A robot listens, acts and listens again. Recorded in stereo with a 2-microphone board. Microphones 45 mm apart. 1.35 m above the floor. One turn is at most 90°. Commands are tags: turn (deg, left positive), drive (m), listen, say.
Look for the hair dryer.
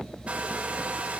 <turn deg="-30"/>
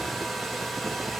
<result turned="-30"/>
<say>Found it: a hair dryer, straight ahead, 2 to 4 m away.</say>